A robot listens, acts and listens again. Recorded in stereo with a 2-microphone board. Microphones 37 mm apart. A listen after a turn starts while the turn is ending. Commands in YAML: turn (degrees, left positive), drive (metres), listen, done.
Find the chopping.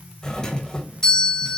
listen: true
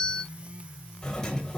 listen: true
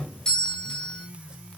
done: "I can't make out chopping to turn to."